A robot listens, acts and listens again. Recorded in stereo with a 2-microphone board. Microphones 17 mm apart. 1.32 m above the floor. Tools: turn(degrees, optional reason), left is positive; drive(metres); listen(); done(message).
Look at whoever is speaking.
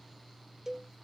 listen()
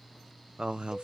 turn(degrees=-60, reason="The man speaking: about 60° right or 120° right.")
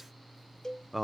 turn(degrees=-15, reason="So it is at 15° right.")
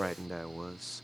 done("Facing the man speaking.")